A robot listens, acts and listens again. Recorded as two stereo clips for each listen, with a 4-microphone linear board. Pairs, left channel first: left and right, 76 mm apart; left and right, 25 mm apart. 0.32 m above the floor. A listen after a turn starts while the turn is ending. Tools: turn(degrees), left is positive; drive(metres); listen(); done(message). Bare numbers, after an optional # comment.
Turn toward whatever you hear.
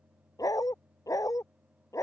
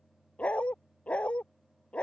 # The dog barking: about 50° left or 130° left.
turn(50)
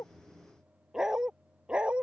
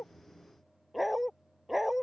# So it is at 15° right.
turn(-15)
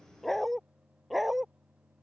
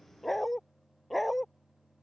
done("Found it: a dog barking, straight ahead.")